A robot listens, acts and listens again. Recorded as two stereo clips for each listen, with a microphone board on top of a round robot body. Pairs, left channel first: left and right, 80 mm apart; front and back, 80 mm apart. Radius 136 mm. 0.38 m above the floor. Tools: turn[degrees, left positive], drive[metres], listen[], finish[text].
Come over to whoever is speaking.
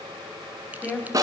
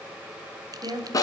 Thought: The woman speaking: 165° left.
Action: turn[165]
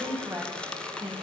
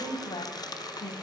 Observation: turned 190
Thought: The woman speaking is now 25° right.
Action: turn[-25]
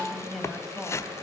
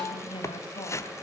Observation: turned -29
Action: drive[1.0]
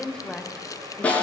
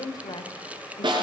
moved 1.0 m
Thought: The woman speaking is now 10° left.
Action: turn[10]
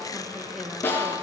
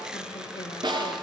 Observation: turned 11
Action: listen[]
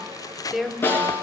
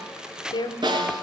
Action: drive[1.0]
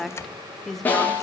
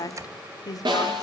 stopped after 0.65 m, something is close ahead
Action: finish[Arrived at the woman speaking, straight ahead.]